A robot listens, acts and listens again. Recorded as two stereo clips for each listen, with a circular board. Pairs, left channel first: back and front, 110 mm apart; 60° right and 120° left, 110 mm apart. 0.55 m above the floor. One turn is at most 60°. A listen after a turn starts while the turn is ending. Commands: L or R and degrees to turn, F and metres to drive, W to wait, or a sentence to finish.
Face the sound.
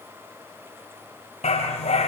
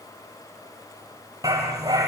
L60
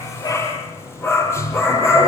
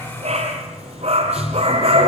L60
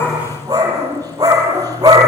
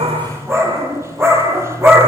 L55
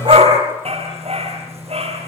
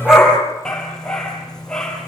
L25
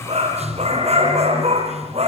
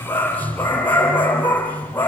L10
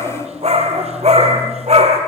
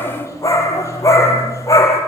Found it: a dog barking, straight ahead, over 4 m away.